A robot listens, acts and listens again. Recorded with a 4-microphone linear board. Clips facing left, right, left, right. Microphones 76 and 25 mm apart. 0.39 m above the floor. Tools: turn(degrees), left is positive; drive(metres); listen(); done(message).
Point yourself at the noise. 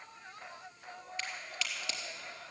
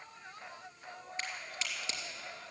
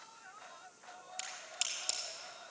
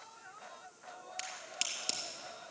turn(degrees=-30)
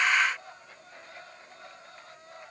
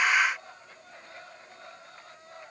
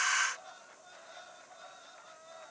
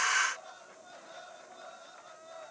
listen()
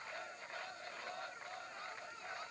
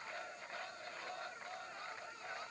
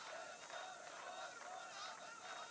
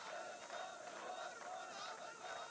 done("I heard a crack, but can't make it out now. It was about straight ahead or 120° right.")